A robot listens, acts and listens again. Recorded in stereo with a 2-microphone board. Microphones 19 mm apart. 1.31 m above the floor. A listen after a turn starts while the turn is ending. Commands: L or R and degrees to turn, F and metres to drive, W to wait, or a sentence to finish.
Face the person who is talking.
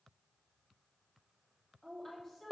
L20
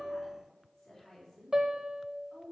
L140
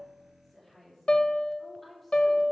Facing the woman speaking, 2 to 4 m away.